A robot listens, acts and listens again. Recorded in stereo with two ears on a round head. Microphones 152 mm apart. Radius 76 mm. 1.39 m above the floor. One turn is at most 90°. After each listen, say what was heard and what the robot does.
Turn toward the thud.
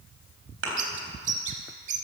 Turn 90° right.
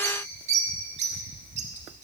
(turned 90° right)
Facing where the thud came from. I can't hear it now.